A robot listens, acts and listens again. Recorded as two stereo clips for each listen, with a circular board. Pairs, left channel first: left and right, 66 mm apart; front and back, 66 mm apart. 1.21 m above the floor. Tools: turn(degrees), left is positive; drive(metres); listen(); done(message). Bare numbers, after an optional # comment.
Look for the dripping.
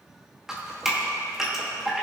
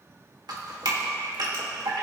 # The dripping: 175° right.
turn(-175)
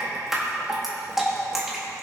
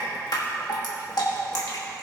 done("Facing the dripping, 2 to 4 m away.")